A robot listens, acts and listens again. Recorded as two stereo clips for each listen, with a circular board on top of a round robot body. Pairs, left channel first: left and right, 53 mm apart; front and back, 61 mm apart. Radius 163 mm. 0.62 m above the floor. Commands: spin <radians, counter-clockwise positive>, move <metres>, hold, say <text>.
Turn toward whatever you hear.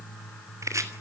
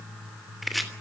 spin -1.57
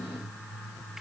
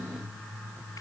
say Found it: chopping, straight ahead.